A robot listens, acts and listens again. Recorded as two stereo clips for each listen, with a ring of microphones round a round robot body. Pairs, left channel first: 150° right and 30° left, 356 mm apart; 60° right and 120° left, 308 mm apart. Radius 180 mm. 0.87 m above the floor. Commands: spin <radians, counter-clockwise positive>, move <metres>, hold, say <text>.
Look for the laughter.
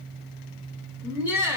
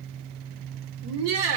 spin 2.01
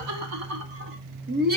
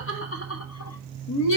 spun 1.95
spin -0.61
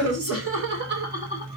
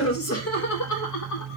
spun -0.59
spin -0.70
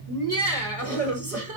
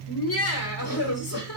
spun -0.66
spin -0.44
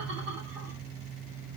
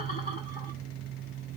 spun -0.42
hold
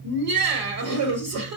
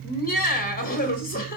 say Found it: laughter, straight ahead.